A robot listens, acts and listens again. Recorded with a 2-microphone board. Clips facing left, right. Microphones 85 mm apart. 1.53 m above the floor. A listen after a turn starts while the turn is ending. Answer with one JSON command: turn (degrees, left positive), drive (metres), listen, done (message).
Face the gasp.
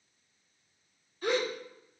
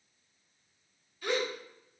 {"turn": 40}
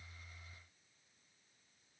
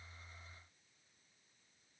{"listen": true}
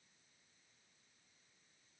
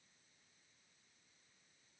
{"done": "I heard a gasp, but can't make it out now. It was about straight ahead or 100° left."}